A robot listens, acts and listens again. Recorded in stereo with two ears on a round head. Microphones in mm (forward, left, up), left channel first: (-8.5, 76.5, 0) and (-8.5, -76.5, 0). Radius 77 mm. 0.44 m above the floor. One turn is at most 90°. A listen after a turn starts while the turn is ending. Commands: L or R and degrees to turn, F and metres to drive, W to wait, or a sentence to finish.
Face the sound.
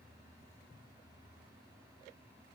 W
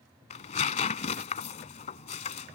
L40
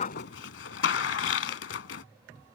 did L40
L90
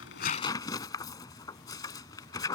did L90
L20
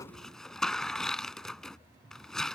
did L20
Found it: tearing paper, straight ahead.